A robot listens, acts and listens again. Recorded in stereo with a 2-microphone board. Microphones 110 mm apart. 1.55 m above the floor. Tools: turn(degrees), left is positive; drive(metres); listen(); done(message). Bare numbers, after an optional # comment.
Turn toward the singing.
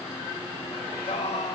turn(90)
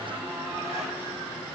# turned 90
listen()
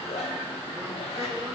listen()
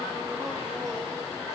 # The singing is now 35° right.
turn(-35)
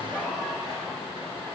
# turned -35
listen()
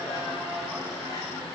listen()
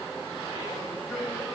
done("Facing the singing, over 4 m away.")